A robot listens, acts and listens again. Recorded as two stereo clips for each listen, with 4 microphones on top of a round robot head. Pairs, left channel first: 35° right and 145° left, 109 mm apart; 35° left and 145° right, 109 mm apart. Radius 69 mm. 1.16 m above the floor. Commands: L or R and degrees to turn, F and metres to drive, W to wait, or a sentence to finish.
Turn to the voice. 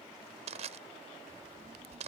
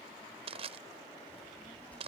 L115
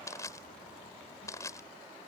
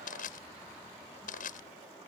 W
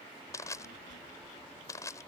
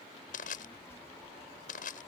R35
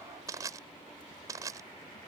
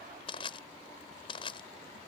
W
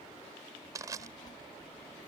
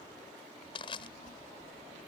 L20
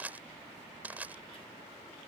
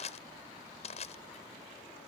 W
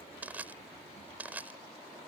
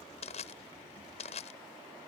W
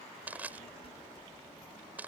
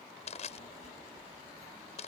Facing the child speaking.